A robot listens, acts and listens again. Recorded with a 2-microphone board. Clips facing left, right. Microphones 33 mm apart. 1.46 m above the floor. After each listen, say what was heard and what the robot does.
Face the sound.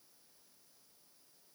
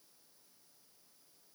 Keep listening.
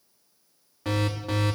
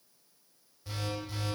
Turn 90° left.
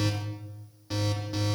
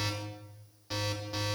Facing the alarm.